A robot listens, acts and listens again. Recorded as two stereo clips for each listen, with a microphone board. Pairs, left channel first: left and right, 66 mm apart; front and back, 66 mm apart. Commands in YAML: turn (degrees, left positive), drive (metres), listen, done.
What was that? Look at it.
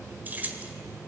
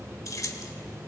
turn: -25
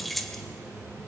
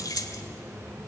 done: "Found it: keys jangling, straight ahead."